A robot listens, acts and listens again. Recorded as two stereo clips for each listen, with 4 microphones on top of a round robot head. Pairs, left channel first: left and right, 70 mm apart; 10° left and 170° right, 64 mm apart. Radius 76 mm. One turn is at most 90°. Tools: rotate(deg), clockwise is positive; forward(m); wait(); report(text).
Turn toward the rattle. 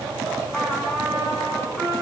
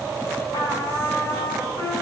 wait()
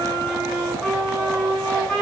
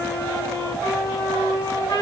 wait()
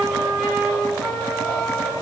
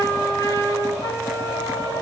report("I can't make out a rattle, only a trumpet.")